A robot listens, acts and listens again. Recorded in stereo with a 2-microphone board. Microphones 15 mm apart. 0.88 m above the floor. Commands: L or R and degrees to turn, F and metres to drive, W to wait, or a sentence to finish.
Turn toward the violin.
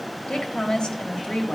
W
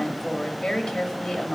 W
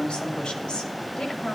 I can't make out a violin to turn to.